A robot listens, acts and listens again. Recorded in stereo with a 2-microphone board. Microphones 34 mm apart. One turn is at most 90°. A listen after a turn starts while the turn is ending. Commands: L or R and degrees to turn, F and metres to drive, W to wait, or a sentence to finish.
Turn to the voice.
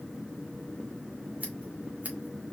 W
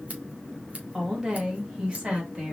R30
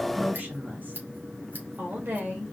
R90
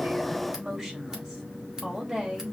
R20
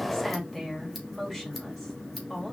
Facing the woman speaking, 2 to 4 m away.